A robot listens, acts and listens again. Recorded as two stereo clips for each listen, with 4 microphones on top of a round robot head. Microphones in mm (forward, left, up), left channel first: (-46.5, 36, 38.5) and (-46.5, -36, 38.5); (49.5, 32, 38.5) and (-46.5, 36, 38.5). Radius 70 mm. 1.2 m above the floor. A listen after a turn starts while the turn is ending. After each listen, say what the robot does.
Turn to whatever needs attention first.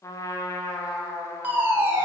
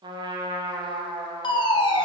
Turn 25° right.
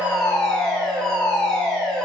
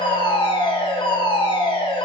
Found it: a fire alarm, straight ahead, 1 to 2 m away.